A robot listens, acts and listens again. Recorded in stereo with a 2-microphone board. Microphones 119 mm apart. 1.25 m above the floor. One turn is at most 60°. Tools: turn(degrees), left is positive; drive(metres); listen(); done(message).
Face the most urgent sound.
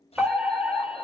turn(degrees=30)
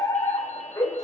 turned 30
turn(degrees=60)
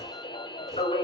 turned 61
turn(degrees=60)
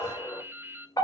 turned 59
turn(degrees=30)
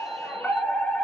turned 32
done("Found it: a fire alarm, straight ahead, over 4 m away.")